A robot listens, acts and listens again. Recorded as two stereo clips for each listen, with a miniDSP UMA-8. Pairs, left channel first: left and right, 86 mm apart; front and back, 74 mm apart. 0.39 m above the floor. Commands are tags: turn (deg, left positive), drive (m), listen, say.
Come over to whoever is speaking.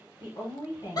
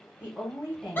<turn deg="105"/>
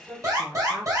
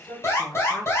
<drive m="1.0"/>
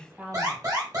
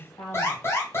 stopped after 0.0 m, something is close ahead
<say>Something is in my way. I am facing the woman speaking but have not reached it.</say>